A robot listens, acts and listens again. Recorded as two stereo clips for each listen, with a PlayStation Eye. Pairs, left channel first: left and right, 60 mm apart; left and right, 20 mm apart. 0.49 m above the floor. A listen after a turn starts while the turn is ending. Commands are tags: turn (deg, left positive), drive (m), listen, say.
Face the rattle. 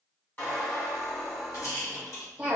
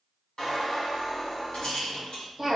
<turn deg="65"/>
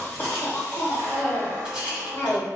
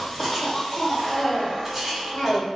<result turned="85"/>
<turn deg="-15"/>
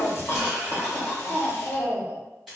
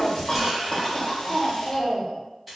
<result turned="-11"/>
<say>Facing the rattle.</say>